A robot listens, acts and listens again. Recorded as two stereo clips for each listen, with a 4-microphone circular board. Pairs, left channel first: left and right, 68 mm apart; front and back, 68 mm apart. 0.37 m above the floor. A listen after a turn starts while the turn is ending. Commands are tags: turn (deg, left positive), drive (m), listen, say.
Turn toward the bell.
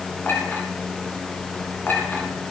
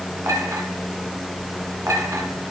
<listen/>
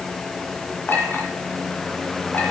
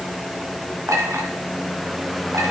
<listen/>
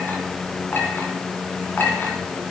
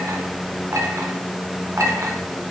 <say>I can't make out a bell, only a clink.</say>